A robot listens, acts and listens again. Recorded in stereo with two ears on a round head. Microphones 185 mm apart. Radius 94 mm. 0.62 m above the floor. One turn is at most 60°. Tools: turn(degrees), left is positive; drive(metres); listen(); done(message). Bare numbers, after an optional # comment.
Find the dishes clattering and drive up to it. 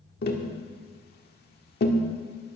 listen()
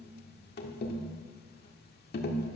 listen()
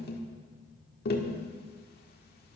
done("I can't make out dishes clattering, only tapping.")